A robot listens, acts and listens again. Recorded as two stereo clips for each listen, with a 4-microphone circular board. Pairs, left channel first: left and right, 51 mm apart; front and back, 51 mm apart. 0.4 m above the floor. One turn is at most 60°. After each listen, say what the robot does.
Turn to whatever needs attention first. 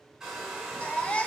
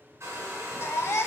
Turn 25° left.
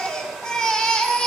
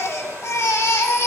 Turn 15° left.
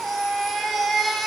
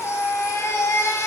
Found it: a baby crying, straight ahead, under 1 m away.